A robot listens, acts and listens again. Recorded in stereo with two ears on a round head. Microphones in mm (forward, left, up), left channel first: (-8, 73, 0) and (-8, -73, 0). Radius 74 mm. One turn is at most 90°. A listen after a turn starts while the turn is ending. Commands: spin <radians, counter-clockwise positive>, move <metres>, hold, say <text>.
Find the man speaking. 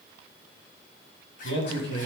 spin 1.57
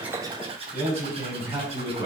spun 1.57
spin -0.35
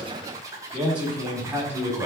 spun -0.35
spin -0.26
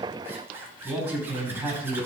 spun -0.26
spin -0.17
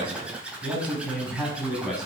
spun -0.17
say Facing the man speaking, over 4 m away.